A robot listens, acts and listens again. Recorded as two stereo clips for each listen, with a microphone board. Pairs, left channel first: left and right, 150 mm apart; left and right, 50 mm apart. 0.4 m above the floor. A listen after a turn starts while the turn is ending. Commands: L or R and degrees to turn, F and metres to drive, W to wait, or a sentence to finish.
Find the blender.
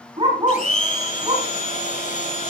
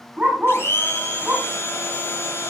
L60
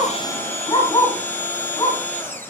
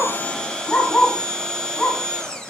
L15
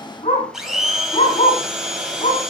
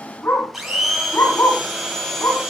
Facing the blender.